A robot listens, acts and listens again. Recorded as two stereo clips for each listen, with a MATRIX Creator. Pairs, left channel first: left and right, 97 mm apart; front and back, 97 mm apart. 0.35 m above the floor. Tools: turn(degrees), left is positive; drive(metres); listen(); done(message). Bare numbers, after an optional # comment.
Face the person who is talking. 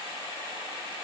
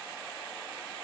listen()
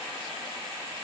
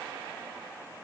listen()
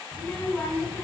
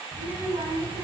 # The child speaking: 165° left.
turn(165)
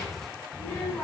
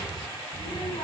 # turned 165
# The child speaking is now 20° left.
turn(20)
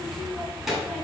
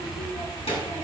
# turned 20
done("Found it: a child speaking, straight ahead, 2 to 4 m away.")